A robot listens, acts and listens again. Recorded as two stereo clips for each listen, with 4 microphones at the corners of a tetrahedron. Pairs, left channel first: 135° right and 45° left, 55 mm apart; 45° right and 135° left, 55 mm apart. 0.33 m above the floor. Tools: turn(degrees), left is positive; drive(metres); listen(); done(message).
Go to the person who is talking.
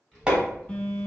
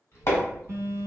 turn(degrees=-75)
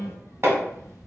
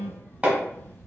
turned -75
turn(degrees=25)
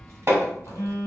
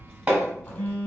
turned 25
turn(degrees=20)
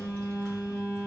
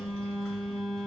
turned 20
drive(metres=1.0)
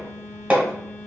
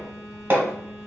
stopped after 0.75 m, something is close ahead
done("I am next to the child speaking.")